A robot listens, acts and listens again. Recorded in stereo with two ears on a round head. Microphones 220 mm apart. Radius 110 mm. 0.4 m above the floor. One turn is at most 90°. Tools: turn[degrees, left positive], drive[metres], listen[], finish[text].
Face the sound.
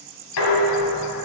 Thought: The dishes clattering: about 70° left or 110° left.
Action: turn[70]
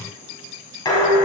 Thought: So it is at 20° left.
Action: turn[20]
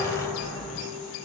Action: finish[Found it: dishes clattering, straight ahead.]